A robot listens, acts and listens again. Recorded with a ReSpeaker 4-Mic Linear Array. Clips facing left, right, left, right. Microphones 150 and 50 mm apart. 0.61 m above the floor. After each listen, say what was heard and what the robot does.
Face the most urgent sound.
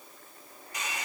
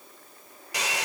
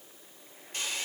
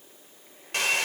Keep listening.
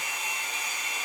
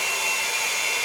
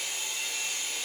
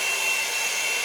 Keep listening.
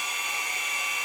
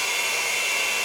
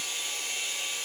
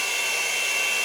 I can't make out anything urgent, only a hair dryer.